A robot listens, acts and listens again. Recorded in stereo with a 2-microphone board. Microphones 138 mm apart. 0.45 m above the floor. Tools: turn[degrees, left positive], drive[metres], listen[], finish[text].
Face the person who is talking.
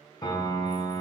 Action: listen[]
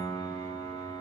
Action: listen[]
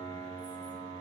Action: finish[I can't make out anyone speaking, only a piano.]